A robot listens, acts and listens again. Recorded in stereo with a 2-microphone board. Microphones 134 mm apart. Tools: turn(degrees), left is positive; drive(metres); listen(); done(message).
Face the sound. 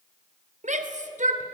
turn(degrees=-65)
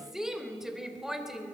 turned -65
done("Facing the shout, 2 to 4 m away.")